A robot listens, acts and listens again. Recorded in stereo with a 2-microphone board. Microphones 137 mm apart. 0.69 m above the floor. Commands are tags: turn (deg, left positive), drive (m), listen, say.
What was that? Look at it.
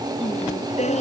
<turn deg="55"/>
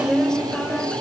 <say>Facing the singing.</say>